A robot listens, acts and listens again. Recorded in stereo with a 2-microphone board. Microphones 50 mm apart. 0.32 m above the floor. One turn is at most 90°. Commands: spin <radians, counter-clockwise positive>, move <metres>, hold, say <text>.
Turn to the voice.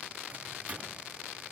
hold
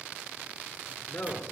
spin 0.44
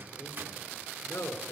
spin 1.57
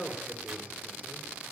spin 0.35
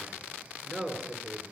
say Facing the man speaking.